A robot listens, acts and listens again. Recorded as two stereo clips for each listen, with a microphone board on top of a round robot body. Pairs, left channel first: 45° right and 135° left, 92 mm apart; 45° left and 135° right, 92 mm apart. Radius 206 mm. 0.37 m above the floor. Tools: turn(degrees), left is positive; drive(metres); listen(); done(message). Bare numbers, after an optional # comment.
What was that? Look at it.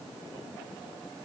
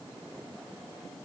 listen()
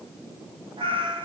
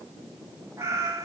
# The cat meowing: 165° left.
turn(165)
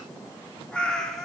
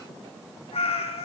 # The cat meowing is now 40° left.
turn(40)
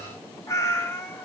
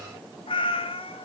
# The cat meowing is now 20° left.
turn(20)
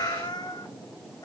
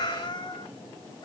done("Found it: a cat meowing, straight ahead, 1 to 2 m away.")